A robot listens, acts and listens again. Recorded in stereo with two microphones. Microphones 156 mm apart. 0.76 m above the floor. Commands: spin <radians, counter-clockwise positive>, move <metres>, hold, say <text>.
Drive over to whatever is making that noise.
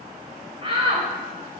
spin -0.61
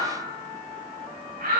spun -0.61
spin -1.83
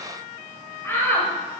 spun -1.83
spin 0.26
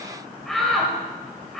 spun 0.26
move 1.0
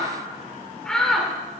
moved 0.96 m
move 1.0
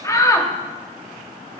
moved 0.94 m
spin 0.44
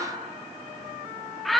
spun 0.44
move 1.0
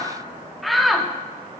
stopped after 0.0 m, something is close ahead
say Arrived at the shout, straight ahead.